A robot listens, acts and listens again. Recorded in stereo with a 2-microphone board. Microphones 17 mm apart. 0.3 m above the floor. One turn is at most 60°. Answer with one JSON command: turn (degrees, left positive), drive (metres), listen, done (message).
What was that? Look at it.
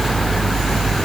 {"listen": true}
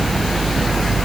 {"listen": true}
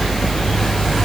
{"done": "I can't make out anything to turn to."}